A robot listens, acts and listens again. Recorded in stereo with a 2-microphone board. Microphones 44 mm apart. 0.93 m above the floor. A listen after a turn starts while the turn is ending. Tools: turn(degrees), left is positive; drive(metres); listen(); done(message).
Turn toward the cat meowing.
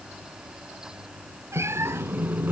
turn(degrees=-90)
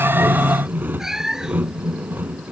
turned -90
turn(degrees=-10)
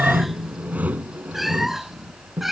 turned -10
done("Found it: a cat meowing, straight ahead.")